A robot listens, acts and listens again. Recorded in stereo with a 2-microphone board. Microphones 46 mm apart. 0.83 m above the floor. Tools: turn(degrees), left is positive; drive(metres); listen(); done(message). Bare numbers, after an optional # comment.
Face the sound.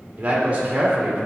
# The man speaking: about 25° right or 155° right.
turn(-25)
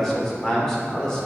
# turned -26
# So it is at 15° left.
turn(15)
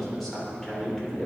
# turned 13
# The man speaking is now 15° left.
turn(15)
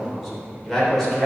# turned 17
done("Facing the man speaking, 2 to 4 m away.")